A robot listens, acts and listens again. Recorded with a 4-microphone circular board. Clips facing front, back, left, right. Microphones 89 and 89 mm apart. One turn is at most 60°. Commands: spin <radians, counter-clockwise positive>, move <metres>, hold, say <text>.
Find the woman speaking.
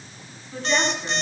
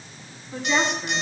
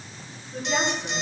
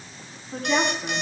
spin -1.05
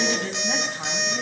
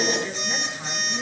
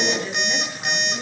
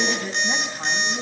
spin -0.61
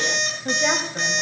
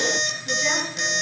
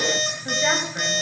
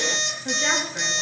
hold
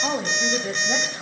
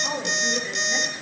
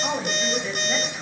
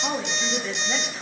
spin 0.17
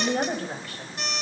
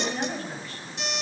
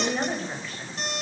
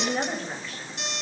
say Found it: a woman speaking, straight ahead, 2 to 4 m away.